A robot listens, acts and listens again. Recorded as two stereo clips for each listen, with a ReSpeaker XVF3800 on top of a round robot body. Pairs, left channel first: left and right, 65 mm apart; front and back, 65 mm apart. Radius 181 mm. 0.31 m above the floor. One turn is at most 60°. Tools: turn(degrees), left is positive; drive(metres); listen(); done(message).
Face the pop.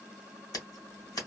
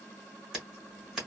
listen()
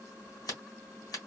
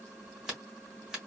listen()
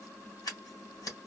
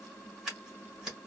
done("I can't make out a pop to turn to.")